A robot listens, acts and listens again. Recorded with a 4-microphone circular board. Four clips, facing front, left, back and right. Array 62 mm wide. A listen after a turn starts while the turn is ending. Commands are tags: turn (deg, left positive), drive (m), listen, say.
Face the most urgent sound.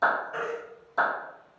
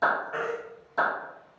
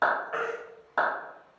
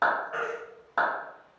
<turn deg="180"/>
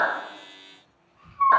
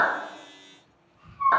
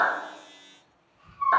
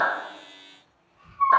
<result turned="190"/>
<turn deg="-10"/>
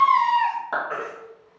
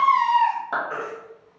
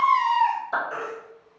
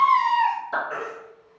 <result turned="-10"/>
<say>Facing the baby crying, under 1 m away.</say>